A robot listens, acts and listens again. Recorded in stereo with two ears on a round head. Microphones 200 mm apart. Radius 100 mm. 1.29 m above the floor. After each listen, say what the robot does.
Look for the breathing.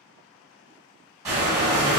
Turn 15° right.
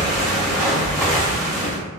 Found it: breathing, straight ahead, 1 to 2 m away.